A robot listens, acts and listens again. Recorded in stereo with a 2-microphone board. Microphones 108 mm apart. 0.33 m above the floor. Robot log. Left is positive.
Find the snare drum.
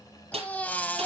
cmd yaw -90
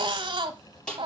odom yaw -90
note: So it is at 10° left.
cmd yaw +10
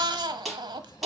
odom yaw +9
end: Facing the snare drum.